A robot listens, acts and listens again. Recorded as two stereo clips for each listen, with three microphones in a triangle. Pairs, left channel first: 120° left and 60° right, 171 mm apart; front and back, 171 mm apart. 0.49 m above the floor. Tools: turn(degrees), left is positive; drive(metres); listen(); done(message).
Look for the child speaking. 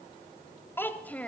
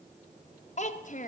turn(degrees=40)
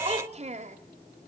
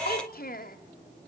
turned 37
turn(degrees=-20)
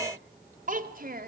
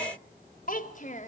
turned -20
turn(degrees=-40)
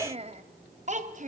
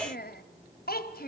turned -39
turn(degrees=-20)
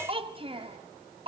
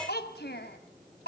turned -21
done("Facing the child speaking.")